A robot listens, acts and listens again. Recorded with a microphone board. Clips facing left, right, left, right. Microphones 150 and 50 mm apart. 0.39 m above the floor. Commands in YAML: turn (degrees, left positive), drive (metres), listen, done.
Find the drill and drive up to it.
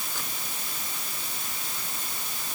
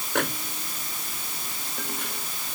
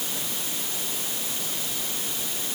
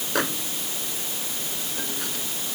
listen: true
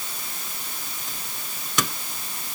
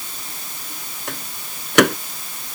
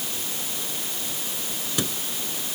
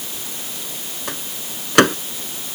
listen: true
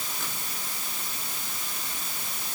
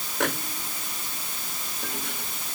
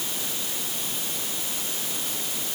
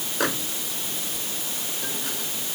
done: "I can't make out a drill to turn to."